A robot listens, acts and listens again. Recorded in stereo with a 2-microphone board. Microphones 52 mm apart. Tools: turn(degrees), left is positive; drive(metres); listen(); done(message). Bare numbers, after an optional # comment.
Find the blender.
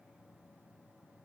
listen()
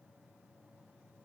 listen()
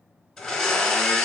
turn(30)
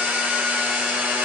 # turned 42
# So it is at 30° right.
turn(-30)
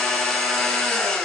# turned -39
# The blender is now 10° left.
turn(10)
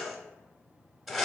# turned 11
done("Facing the blender.")